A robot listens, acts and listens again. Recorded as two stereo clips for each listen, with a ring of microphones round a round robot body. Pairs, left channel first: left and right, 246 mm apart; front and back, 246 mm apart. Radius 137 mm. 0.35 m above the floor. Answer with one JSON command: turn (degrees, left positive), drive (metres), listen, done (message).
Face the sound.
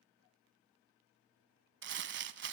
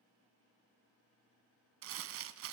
{"turn": -135}
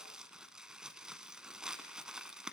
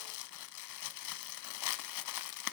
{"done": "Facing the crumpling."}